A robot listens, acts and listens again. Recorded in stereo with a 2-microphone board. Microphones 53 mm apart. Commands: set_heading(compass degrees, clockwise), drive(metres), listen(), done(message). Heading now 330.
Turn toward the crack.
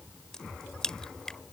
set_heading(300)
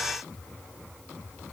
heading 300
listen()
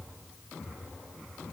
done("I heard a crack, but can't make it out now. It was about 20° right or 140° left.")